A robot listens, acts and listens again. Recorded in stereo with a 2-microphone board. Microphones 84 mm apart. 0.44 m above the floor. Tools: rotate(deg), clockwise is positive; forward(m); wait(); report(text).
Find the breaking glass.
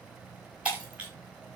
rotate(20)
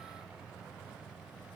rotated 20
wait()
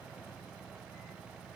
report("I heard breaking glass, but can't make it out now. It was about straight ahead or 140° right.")